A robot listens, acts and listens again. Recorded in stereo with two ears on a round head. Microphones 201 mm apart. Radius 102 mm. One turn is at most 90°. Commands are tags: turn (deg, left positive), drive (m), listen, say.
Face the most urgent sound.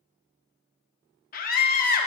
<turn deg="40"/>
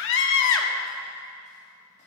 <turn deg="90"/>
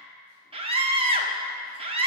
<turn deg="-30"/>
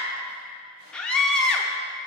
<say>Found it: a scream, straight ahead.</say>